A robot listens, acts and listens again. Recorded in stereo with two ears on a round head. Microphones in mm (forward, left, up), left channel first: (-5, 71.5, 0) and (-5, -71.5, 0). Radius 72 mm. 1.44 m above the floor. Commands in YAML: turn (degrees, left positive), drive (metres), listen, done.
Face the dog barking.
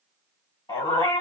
turn: 25
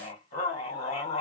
turn: 130
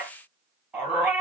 turn: -15
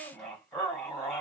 done: "Found it: a dog barking, straight ahead."